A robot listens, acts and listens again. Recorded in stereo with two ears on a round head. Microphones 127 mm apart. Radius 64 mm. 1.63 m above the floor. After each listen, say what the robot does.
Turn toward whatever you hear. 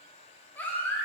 Turn 30° left.
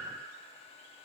Keep listening.
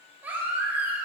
Turn 15° right.
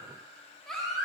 Found it: a baby crying, straight ahead, 2 to 4 m away.